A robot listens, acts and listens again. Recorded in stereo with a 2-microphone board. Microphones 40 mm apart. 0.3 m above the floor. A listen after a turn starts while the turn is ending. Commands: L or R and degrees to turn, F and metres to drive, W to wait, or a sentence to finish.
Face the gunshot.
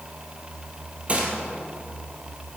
R35
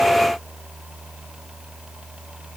W
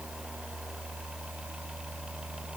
I heard a gunshot, but can't make it out now. It was about straight ahead or 110° right.